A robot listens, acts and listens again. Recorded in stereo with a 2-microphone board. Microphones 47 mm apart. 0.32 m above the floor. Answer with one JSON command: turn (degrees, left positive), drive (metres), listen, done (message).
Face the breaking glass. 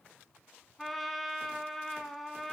{"listen": true}
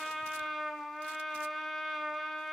{"listen": true}
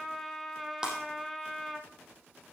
{"turn": -15}
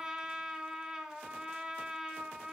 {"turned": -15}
{"listen": true}
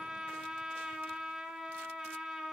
{"done": "I heard breaking glass, but can't make it out now. It was about straight ahead or 150° right."}